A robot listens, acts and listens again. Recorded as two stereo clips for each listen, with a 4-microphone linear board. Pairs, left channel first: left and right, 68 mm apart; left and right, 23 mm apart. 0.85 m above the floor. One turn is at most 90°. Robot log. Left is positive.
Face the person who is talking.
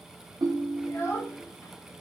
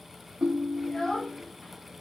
note: The child speaking: about 40° left or 140° left.
cmd yaw +40
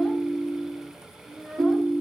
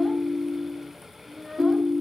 end: Found it: a child speaking, straight ahead, 1 to 2 m away.